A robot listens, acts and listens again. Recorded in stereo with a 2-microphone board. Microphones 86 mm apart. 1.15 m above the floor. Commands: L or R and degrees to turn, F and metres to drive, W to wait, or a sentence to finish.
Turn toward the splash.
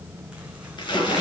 L60
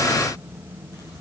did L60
W
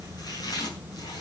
I heard a splash, but can't make it out now. It was about straight ahead or 60° left.